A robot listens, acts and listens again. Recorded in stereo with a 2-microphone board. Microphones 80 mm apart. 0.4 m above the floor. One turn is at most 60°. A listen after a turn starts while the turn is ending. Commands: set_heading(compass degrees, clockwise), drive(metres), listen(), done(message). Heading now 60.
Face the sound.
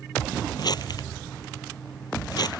set_heading(5)
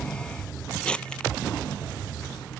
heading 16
set_heading(6)
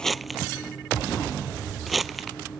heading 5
done("Found it: crumpling, straight ahead.")